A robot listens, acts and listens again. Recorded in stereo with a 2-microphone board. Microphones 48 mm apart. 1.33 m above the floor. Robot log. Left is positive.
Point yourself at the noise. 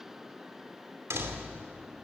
note: The door slam: about 70° right or 110° right.
cmd yaw -70
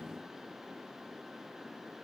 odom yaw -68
cmd idle
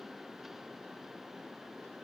end: I heard a door slam, but can't make it out now. It was about 5° right or 40° right.